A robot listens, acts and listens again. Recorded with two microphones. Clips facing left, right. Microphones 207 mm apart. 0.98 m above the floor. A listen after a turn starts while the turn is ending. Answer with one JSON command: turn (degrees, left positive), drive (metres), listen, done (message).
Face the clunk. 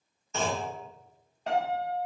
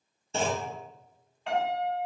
{"turn": -30}
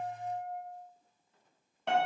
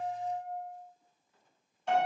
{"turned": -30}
{"listen": true}
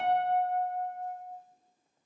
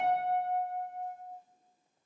{"done": "I heard a clunk, but can't make it out now. It was about straight ahead or 120° right."}